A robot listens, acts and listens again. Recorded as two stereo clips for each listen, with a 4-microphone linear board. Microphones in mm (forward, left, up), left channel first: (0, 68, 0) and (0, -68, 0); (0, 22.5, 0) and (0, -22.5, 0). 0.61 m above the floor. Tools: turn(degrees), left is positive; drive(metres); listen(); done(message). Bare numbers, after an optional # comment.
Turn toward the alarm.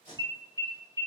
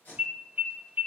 # The alarm: about 20° right or 160° right.
turn(-20)
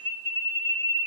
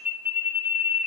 # So it is at 135° right.
turn(-135)
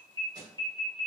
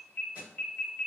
# The alarm is now 35° left.
turn(35)
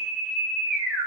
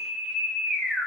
# The alarm is now 10° right.
turn(-10)
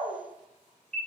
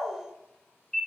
done("Found it: an alarm, straight ahead, 1 to 2 m away.")